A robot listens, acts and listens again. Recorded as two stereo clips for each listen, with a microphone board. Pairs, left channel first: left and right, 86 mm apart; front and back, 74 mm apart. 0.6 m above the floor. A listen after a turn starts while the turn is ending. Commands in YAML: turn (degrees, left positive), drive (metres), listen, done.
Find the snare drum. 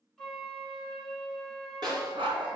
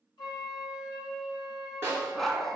turn: -120
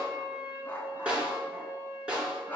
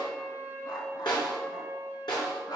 turn: -15
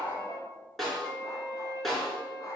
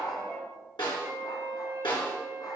done: "Found it: a snare drum, straight ahead."